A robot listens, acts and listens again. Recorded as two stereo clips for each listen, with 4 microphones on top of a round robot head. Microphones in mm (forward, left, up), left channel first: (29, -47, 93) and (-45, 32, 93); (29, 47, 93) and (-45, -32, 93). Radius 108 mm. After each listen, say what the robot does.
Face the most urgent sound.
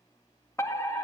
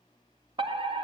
Turn 105° right.
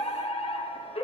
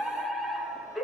Turn 45° right.
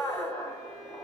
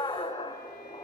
Turn 10° left.
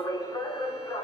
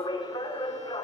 Facing the fire alarm.